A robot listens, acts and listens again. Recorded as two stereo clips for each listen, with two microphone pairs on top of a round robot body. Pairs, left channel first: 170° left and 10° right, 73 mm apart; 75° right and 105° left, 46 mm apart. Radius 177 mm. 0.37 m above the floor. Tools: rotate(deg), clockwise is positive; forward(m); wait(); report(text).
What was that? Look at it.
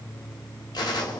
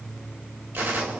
rotate(-150)
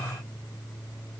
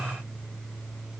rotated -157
report("I heard a gunshot from this way, but can't make it out now.")